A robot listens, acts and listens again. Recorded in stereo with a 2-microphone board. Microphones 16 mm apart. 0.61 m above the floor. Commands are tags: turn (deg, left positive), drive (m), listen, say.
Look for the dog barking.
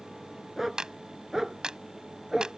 <turn deg="-30"/>
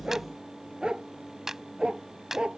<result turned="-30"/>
<turn deg="-105"/>
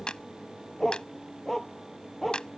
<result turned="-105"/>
<turn deg="10"/>
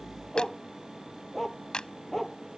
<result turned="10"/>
<say>Found it: a dog barking, straight ahead.</say>